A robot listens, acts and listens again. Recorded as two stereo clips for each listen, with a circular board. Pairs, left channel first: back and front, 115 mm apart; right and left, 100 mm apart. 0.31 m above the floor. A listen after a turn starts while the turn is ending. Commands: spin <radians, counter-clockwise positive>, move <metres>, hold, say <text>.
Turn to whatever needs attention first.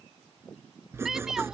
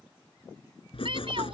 spin 1.48
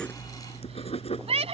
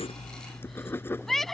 say Found it: a shout, straight ahead.